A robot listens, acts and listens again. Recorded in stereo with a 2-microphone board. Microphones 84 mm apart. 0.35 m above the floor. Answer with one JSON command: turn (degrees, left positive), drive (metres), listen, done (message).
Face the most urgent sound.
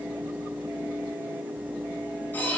{"listen": true}
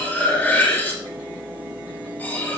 {"listen": true}
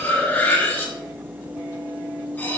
{"done": "I can't make out anything urgent to turn to."}